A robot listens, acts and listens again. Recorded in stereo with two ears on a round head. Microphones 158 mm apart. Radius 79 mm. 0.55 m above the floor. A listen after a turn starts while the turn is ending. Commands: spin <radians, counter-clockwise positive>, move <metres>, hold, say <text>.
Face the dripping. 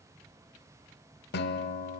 hold
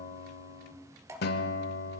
spin -0.35
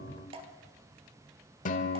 spin -2.44
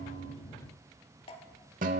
spin 0.70
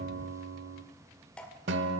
spin 0.17
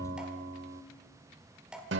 say Found it: dripping, straight ahead, 1 to 2 m away.